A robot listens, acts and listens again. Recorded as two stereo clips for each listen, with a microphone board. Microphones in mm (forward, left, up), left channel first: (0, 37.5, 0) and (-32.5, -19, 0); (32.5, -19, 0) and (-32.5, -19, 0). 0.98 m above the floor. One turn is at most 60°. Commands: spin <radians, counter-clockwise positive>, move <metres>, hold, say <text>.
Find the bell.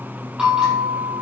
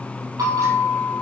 spin 1.05
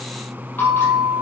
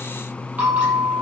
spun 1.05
spin 1.05
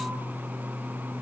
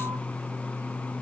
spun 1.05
spin 0.96
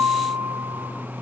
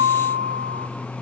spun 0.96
spin 0.26
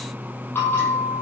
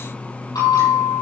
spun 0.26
say Facing the bell, over 4 m away.